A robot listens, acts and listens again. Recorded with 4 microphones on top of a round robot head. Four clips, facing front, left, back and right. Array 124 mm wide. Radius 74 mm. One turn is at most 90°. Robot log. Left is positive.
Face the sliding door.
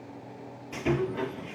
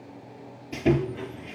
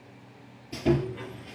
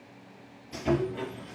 note: The sliding door: 15° right.
cmd yaw -15
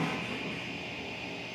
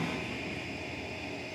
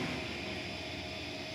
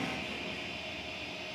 cmd idle
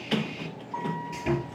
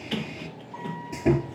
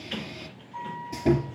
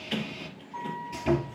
end: Found it: a sliding door, straight ahead, 1 to 2 m away.